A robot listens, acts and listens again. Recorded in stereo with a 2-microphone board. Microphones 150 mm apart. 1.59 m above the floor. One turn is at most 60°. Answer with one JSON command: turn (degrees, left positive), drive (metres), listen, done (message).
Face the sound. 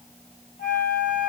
{"turn": 60}
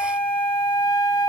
{"turn": 35}
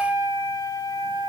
{"turn": 30}
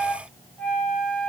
{"done": "Found it: a flute, straight ahead, under 1 m away."}